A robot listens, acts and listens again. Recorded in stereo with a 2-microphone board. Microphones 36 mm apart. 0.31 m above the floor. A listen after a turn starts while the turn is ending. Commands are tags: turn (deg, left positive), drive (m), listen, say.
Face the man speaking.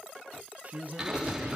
<turn deg="-50"/>
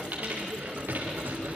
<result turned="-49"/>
<listen/>
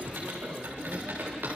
<listen/>
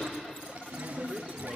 <turn deg="-45"/>
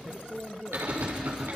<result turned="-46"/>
<say>Found it: a man speaking, straight ahead, over 4 m away.</say>